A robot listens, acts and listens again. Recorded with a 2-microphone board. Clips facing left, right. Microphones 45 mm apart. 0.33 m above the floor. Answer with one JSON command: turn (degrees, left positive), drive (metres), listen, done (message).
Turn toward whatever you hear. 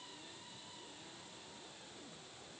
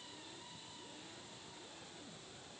{"listen": true}
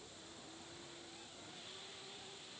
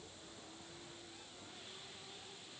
{"listen": true}
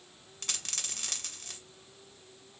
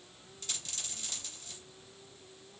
{"turn": 65}
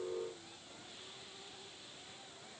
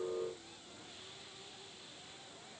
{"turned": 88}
{"listen": true}
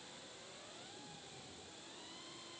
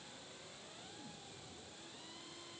{"done": "I heard a dropped coin, but can't make it out now. It was about 25° right or 30° left."}